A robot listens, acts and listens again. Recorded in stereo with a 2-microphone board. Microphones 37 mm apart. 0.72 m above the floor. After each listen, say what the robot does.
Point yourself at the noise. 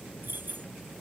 Turn 65° right.
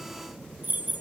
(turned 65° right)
Turn 55° right.
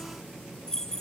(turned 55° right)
Turn 15° left.
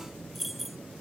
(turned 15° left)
Facing the keys jangling.